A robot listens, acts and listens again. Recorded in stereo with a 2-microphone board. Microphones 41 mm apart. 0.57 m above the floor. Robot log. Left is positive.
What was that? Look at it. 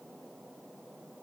cmd idle
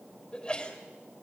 note: The sneeze: about 20° left or 160° left.
cmd yaw +20
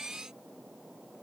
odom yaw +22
cmd idle
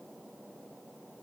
end: I heard a sneeze, but can't make it out now. It was about straight ahead or 135° left.